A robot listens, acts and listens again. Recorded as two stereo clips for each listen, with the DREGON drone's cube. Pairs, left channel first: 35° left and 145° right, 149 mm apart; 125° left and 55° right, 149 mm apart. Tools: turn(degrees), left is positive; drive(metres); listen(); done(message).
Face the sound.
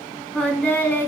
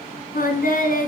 turn(degrees=110)
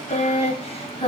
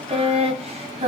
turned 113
turn(degrees=-10)
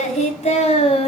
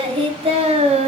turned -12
turn(degrees=-10)
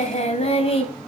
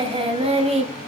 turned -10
turn(degrees=-15)
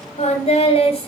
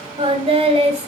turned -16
turn(degrees=-15)
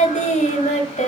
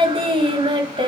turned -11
done("Facing the singing.")